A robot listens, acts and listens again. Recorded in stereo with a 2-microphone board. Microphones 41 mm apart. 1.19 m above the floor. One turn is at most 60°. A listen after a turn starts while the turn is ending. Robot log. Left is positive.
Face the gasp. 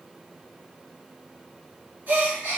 note: The gasp: about 50° right or 130° right.
cmd yaw -50
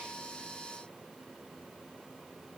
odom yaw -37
cmd idle
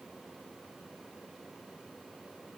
end: I heard a gasp, but can't make it out now. It was about 15° right or 95° right.